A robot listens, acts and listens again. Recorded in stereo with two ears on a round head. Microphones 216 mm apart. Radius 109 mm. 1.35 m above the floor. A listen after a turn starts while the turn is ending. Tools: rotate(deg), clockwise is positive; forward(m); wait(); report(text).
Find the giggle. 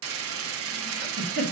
rotate(40)
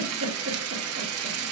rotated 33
wait()
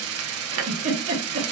rotate(105)
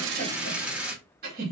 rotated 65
rotate(40)
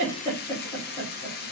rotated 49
rotate(-10)
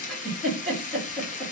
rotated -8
report("Found it: a giggle, straight ahead.")